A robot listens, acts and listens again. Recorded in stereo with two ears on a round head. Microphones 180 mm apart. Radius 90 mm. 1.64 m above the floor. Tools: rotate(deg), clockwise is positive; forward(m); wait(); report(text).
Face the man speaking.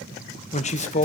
rotate(-35)
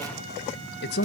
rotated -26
rotate(-115)
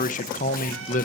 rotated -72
rotate(-45)
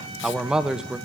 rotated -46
report("Found it: a man speaking, straight ahead, 1 to 2 m away.")